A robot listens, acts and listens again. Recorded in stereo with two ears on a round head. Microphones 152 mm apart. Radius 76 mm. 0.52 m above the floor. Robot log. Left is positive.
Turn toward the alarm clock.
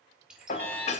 cmd yaw +30
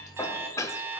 note: So it is at 15° right.
cmd yaw -15
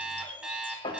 end: Facing the alarm clock, 2 to 4 m away.